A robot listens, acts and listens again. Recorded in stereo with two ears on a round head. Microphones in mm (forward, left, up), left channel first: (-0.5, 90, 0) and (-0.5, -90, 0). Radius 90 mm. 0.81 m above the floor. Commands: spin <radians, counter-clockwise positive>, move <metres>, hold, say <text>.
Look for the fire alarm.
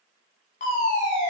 spin 0.70
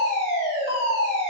spin 1.57
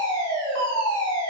spin 0.44
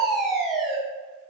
say Found it: a fire alarm, straight ahead, 2 to 4 m away.